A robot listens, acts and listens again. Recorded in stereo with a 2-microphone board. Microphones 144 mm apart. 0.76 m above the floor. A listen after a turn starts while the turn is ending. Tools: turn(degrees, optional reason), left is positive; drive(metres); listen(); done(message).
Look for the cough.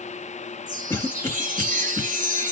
turn(degrees=15, reason="The cough: about 15° left or 165° left.")
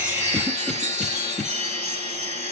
listen()
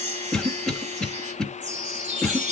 done("Found it: a cough, straight ahead.")